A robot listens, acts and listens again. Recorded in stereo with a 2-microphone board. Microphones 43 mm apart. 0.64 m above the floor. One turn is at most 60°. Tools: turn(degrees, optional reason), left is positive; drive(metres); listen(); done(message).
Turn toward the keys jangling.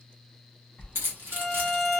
turn(degrees=-60, reason="The keys jangling: about 60° right or 120° right.")
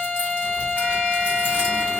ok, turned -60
listen()
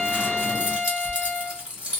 turn(degrees=-35, reason="So it is at 35° right.")
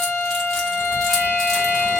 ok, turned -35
listen()
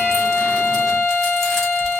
listen()
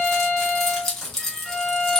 turn(degrees=10, reason="The keys jangling is now 10° left.")
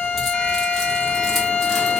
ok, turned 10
listen()
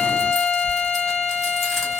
listen()
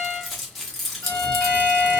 done("Found it: keys jangling, straight ahead, 1 to 2 m away.")